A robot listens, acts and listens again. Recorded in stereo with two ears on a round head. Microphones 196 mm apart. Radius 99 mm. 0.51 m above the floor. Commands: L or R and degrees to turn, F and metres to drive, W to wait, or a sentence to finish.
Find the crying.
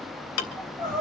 R30
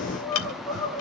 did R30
L15
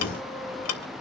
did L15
W
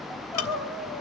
Found it: crying, straight ahead.